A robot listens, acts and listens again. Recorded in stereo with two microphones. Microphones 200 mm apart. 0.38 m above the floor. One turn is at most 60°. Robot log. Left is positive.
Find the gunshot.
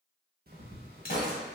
note: The gunshot: about 50° left or 130° left.
cmd yaw +50
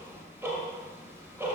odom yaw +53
cmd idle
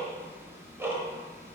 end: I heard a gunshot, but can't make it out now. It was about straight ahead or 75° left.